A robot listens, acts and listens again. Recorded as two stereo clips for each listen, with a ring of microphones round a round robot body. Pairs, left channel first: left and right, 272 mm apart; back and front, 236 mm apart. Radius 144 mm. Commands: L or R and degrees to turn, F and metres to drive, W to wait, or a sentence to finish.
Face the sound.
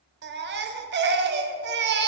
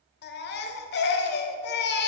R135
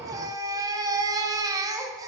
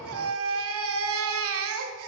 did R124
R15
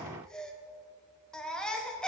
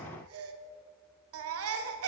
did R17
Facing the baby crying, under 1 m away.